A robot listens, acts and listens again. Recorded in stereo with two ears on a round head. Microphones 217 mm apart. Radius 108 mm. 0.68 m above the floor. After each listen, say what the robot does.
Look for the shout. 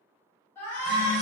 Turn 30° left.
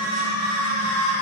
Turn 135° left.
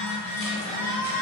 Turn 40° left.
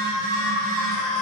Facing the shout.